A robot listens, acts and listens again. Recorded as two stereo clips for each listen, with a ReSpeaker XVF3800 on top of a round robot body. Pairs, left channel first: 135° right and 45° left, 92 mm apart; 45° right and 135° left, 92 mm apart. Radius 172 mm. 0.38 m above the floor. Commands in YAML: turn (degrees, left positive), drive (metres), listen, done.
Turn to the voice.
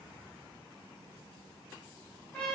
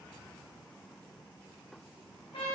listen: true
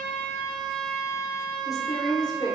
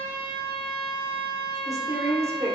turn: -170
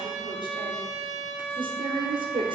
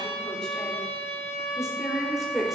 turn: 50
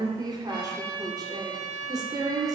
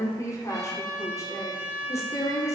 done: "Facing the woman speaking."